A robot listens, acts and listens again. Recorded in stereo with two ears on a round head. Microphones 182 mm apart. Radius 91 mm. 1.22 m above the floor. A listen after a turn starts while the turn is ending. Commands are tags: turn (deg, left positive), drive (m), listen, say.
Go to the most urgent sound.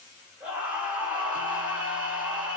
<turn deg="-30"/>
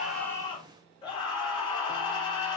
<turn deg="25"/>
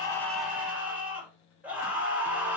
<turn deg="-10"/>
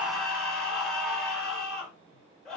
<drive m="1.0"/>
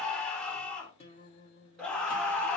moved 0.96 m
<drive m="1.0"/>
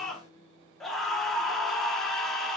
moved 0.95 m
<drive m="1.0"/>
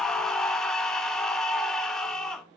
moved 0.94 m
<drive m="1.0"/>
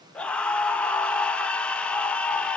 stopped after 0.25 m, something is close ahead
<say>Arrived at the scream, straight ahead.</say>